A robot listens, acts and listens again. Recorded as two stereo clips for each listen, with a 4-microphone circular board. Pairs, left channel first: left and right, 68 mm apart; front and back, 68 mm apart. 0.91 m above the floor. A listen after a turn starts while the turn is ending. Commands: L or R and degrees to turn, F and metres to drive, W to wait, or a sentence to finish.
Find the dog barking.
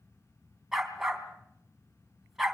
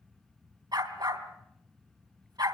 R175
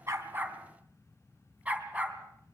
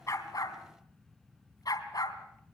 R20
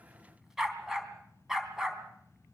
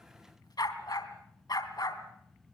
Facing the dog barking.